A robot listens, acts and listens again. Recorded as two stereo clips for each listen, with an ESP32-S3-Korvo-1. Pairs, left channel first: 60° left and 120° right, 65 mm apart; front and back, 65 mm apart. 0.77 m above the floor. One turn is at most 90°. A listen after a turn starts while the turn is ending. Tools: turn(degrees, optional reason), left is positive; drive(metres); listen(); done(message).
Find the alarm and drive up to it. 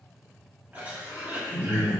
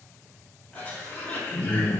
turn(degrees=-90, reason="The alarm: 130° right.")
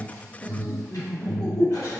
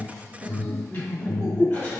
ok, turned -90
turn(degrees=-20, reason="The alarm is now 20° right.")
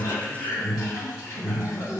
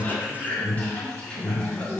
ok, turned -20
drive(metres=1.0)
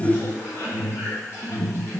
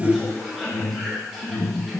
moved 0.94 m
drive(metres=1.0)
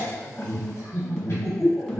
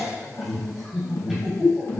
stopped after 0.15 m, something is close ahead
turn(degrees=-10, reason="The alarm is now 10° right.")
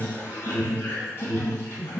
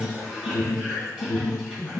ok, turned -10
done("Arrived at the alarm, straight ahead.")